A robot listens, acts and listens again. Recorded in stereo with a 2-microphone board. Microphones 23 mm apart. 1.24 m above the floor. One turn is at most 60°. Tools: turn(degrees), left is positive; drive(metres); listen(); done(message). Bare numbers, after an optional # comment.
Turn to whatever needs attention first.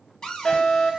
# The fire alarm: about 40° left or 140° left.
turn(40)
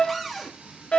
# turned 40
# So it is at 95° left.
turn(60)
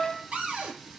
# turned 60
# The fire alarm is now 10° left.
turn(10)
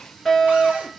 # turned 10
done("Facing the fire alarm, 2 to 4 m away.")